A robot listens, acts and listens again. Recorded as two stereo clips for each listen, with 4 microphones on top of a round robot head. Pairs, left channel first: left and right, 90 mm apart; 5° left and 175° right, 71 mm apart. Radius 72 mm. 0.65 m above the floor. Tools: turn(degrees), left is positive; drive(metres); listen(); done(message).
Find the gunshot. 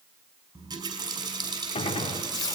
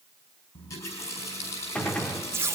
turn(degrees=80)
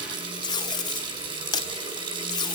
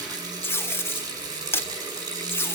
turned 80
done("I heard a gunshot from this way, but can't make it out now.")